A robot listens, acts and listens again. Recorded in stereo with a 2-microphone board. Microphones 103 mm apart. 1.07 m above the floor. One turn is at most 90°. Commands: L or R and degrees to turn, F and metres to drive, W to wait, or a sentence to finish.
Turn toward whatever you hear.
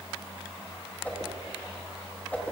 L30
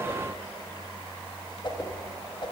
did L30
L90
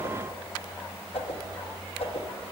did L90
L70
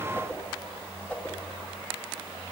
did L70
L15
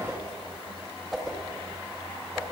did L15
Found it: a whoosh, straight ahead.